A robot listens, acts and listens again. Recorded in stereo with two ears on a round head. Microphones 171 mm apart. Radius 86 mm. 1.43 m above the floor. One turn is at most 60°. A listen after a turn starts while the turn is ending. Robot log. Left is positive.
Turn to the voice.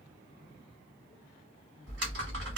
cmd idle
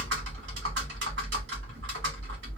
cmd idle
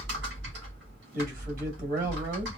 note: The man speaking: about 50° right or 130° right.
cmd yaw -50
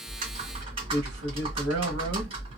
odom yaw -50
cmd idle
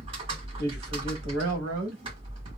note: So it is at 80° right.
cmd yaw -60
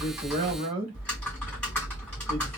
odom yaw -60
note: The man speaking is now 40° right.
cmd yaw -40
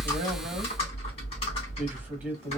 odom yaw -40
note: The man speaking is now 10° right.
cmd yaw -10
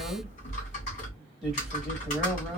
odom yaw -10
cmd idle
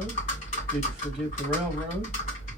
cmd idle
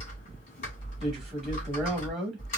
end: Found it: a man speaking, straight ahead.